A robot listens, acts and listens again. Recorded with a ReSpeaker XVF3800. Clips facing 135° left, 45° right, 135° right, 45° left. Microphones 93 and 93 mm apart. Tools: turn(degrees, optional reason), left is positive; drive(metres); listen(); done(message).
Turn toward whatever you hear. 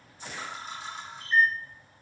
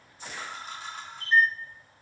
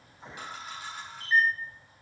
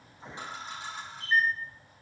turn(degrees=-15, reason="The camera shutter: 15° right.")
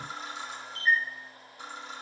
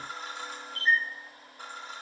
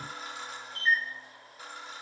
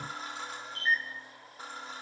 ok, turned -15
done("Facing the camera shutter.")